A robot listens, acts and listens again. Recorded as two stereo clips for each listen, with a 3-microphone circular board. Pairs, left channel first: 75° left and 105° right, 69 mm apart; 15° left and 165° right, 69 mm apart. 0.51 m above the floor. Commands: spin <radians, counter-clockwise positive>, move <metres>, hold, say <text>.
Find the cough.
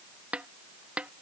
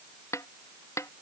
hold
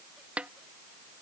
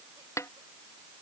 hold
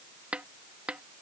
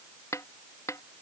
say I can't make out a cough to turn to.